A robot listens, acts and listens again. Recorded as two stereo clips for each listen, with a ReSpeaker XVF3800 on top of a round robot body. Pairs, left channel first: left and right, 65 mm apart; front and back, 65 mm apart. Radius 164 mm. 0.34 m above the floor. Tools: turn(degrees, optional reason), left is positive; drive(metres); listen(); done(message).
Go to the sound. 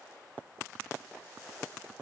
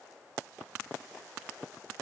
listen()
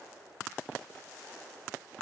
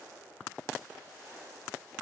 listen()
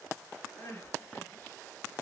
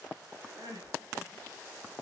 turn(degrees=150, reason="The crying: 150° left.")
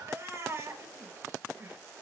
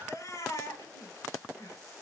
turn(degrees=-40, reason="The crying is now 40° right.")
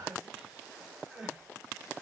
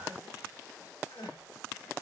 drive(metres=1.0)
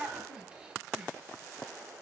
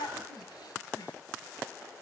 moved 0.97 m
turn(degrees=-10, reason="The crying is now 10° right.")
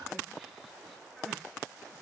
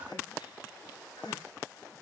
drive(metres=1.0)
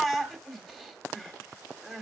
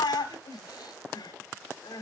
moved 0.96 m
drive(metres=1.0)
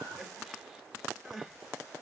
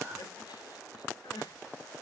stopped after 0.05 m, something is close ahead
done("Arrived at the crying, straight ahead.")